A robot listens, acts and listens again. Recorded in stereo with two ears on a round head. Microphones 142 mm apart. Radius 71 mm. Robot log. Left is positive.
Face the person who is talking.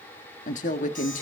note: The woman speaking: about 50° left or 130° left.
cmd yaw +50
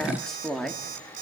end: Found it: a woman speaking, straight ahead.